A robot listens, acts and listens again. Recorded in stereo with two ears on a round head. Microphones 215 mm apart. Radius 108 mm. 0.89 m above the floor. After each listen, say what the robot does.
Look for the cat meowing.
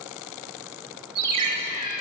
Turn 40° left.
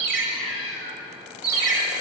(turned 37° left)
Turn 100° left.
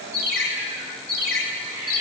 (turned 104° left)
Keep listening.
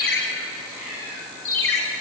Turn 10° right.
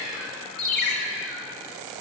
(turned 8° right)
Facing the cat meowing.